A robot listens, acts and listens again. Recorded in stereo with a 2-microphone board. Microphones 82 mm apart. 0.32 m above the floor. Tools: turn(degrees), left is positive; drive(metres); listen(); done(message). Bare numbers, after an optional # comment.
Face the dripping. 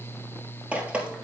# The dripping: about 15° right or 165° right.
turn(-15)
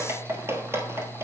# So it is at 150° right.
turn(-150)
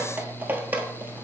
# The dripping is now 25° right.
turn(-25)
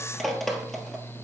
done("Facing the dripping, 1 to 2 m away.")